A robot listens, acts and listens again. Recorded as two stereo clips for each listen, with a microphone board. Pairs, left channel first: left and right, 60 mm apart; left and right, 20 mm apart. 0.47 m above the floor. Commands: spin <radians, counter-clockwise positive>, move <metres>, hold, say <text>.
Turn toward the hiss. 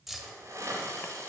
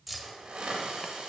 spin -0.96
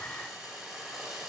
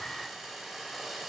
spin -0.26
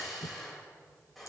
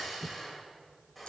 say Found it: a hiss, straight ahead.